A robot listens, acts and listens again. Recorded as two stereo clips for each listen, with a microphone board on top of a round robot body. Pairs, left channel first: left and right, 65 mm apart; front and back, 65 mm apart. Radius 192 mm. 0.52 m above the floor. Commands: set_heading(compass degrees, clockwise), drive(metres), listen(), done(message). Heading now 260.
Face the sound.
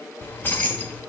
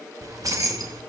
set_heading(105)
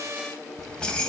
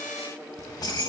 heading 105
set_heading(90)
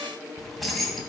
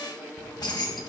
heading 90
done("Found it: keys jangling, straight ahead, 2 to 4 m away.")